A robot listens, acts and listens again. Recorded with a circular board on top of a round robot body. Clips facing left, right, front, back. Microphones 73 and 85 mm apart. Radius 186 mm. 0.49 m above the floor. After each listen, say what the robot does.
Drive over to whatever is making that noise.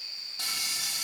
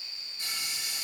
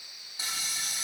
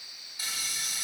Turn 70° left.
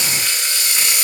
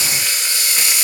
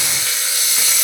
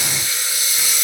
Turn 10° right.
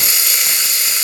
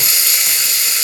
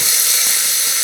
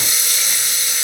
Drive 1.0 m forward.
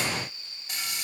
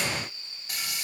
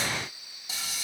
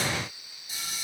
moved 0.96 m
Drive 1.0 m forward.
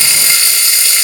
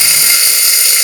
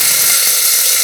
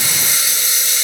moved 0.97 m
Turn 15° right.
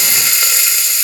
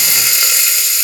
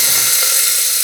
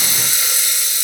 Drive 1.0 m forward.
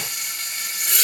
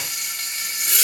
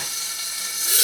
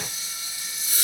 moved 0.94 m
Drive 1.0 m forward.
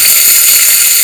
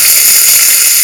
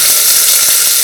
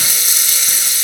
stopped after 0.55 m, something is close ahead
Turn 10° right.
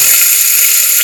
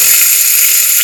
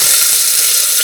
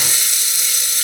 Arrived at the frying, straight ahead.